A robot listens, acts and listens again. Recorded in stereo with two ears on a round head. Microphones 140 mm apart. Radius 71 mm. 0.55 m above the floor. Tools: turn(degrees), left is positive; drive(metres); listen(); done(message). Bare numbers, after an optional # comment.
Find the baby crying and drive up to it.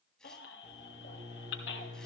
turn(90)
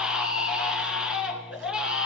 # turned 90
drive(1.0)
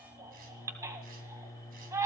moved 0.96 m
# The baby crying is now 20° right.
turn(-20)
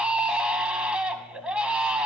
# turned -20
# The baby crying is now 10° right.
turn(-10)
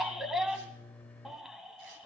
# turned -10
drive(1.0)
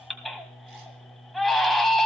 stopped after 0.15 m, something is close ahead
done("Arrived at the baby crying, straight ahead.")